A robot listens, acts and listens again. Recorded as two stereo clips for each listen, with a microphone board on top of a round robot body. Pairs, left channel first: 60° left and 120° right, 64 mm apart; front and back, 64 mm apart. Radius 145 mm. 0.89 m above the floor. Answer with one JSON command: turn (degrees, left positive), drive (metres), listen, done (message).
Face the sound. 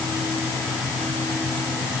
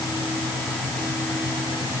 {"listen": true}
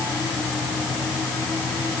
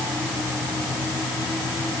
{"listen": true}
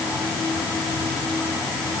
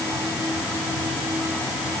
{"done": "I can't make out anything to turn to."}